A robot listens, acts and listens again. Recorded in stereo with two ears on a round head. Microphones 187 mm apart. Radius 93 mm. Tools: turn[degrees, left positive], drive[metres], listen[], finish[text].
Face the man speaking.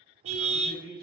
Thought: The man speaking: about 55° left or 125° left.
Action: turn[55]
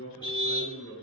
Thought: So it is at 65° left.
Action: turn[65]
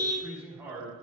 Thought: The man speaking is now 15° right.
Action: turn[-15]
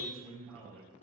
Action: finish[Found it: a man speaking, straight ahead.]